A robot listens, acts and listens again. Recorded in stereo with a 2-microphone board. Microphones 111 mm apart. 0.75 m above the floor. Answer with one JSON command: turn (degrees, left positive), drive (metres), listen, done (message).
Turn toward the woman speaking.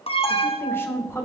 {"turn": 25}
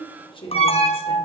{"turn": 125}
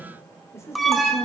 {"turn": 25}
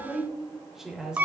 {"done": "Facing the woman speaking."}